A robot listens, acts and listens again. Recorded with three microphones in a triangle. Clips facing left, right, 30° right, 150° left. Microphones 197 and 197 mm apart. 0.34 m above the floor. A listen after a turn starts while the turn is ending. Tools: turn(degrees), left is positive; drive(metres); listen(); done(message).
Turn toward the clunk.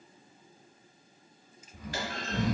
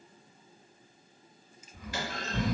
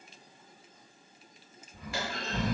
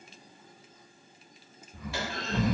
turn(degrees=60)
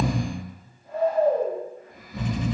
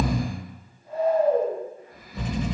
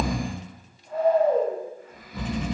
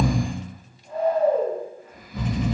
done("I heard a clunk from this way, but can't make it out now.")